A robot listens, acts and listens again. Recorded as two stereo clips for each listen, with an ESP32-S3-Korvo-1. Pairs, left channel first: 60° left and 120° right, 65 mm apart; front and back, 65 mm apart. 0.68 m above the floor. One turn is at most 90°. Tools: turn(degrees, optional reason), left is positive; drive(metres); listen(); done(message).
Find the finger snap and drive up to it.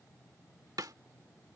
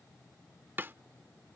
listen()
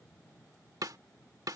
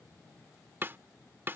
listen()
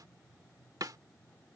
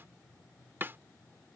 done("I can't make out a finger snap to turn to.")